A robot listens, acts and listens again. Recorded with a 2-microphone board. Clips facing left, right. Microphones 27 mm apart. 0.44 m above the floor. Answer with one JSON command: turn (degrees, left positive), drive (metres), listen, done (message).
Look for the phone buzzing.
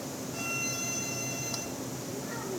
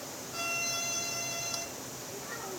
{"listen": true}
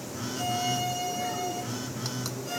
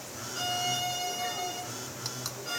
{"turn": 40}
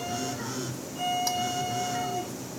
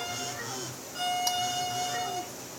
{"done": "Facing the phone buzzing."}